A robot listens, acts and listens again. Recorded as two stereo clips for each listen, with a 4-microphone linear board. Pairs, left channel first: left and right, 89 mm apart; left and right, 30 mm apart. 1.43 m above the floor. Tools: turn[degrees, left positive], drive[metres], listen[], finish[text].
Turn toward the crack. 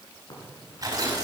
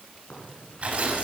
Thought: The crack: about 55° left or 125° left.
Action: turn[55]
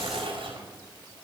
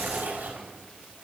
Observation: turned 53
Action: listen[]
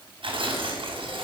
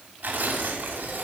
Action: finish[I heard a crack, but can't make it out now. It was about straight ahead or 75° left.]